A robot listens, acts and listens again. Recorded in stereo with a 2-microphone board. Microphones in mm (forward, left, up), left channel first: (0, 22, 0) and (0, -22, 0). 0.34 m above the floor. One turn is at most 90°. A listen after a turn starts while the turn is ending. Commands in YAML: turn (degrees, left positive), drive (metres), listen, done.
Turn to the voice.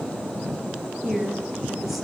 turn: -30
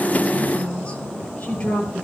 turn: 25
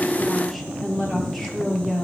done: "Found it: a woman speaking, straight ahead."